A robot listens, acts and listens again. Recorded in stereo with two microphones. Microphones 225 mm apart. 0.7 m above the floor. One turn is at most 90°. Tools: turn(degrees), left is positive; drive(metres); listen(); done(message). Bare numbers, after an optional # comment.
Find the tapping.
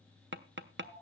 # The tapping: about 55° right or 125° right.
turn(-55)
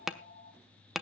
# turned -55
done("Found it: tapping, straight ahead.")